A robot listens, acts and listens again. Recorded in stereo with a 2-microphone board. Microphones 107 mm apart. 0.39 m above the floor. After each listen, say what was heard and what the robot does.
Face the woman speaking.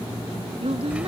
The woman speaking: about 65° right or 115° right. Turn 65° right.
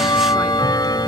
Keep listening.
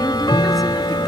Keep listening.
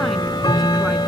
I heard a woman speaking, but can't make it out now. It was about straight ahead or 50° right.